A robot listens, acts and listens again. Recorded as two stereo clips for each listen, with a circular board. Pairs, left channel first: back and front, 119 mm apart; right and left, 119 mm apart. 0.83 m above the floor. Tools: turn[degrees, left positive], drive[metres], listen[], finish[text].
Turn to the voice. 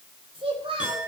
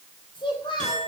Thought: The child speaking: 40° right.
Action: turn[-40]
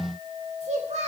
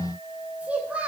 Thought: The child speaking is now 10° left.
Action: turn[10]
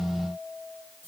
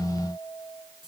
Action: listen[]
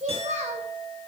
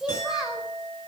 Action: finish[Found it: a child speaking, straight ahead, 2 to 4 m away.]